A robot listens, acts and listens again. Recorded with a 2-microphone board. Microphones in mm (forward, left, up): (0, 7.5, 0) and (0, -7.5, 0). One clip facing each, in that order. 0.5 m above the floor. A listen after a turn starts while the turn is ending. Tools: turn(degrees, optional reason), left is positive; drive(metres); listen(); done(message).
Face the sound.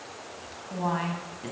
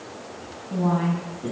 turn(degrees=30, reason="The woman speaking: about 30° left or 150° left.")
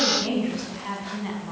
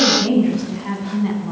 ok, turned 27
done("Facing the woman speaking, over 4 m away.")